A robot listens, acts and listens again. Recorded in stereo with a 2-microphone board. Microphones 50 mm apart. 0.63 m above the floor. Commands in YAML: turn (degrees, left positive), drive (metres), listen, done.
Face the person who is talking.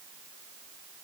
listen: true
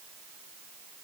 listen: true
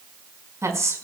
turn: -90
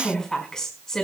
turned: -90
turn: 15
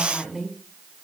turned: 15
done: "Found it: a woman speaking, straight ahead, over 4 m away."